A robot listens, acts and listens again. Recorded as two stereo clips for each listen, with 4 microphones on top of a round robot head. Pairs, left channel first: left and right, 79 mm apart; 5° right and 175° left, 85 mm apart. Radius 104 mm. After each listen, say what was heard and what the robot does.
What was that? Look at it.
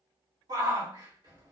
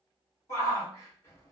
The shout: 60° right. Turn 60° right.
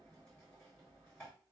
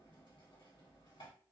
Keep listening.
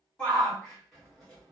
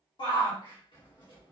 Found it: a shout, straight ahead.